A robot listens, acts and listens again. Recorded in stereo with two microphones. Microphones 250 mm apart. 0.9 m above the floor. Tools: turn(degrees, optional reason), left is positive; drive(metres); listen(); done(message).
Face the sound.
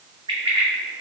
turn(degrees=-20, reason="The bird: about 20° right or 160° right.")
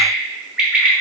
done("Found it: a bird, straight ahead.")